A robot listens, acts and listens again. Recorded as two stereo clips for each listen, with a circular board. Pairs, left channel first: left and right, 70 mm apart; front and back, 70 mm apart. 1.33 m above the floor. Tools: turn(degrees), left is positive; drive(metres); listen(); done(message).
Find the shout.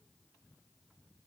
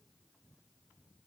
listen()
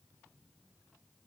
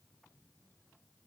listen()
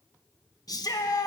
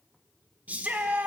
turn(degrees=110)
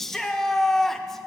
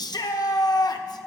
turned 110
done("Facing the shout, 1 to 2 m away.")